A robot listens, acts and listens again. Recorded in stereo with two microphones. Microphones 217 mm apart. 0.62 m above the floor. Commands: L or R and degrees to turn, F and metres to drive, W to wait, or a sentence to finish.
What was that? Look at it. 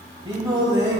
R20
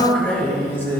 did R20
L10
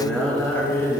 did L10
L10
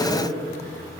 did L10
L10
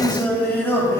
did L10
L15
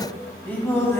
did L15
L10
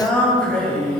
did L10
Facing the singing.